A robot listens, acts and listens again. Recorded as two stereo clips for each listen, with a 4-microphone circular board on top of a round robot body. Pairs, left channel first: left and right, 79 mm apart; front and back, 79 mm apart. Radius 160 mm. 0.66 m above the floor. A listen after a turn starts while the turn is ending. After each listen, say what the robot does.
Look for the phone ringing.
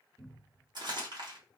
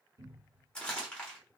Keep listening.
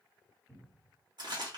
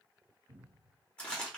Keep listening.
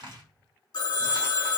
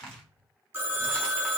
Turn 125° left.
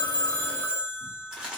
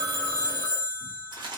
Turn 30° left.
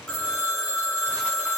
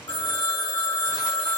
Found it: a phone ringing, straight ahead.